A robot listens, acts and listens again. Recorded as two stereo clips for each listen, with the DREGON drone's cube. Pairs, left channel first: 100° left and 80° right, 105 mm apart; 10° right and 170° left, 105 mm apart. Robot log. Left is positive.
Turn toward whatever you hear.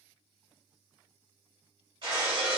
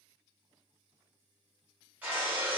note: The breaking glass: 115° right.
cmd yaw -115
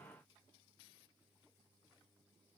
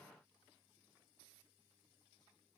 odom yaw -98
note: Nothing new. It was at 20° right.
cmd yaw -20
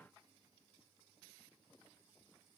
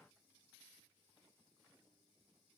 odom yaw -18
end: Facing where the breaking glass came from. I can't hear it now.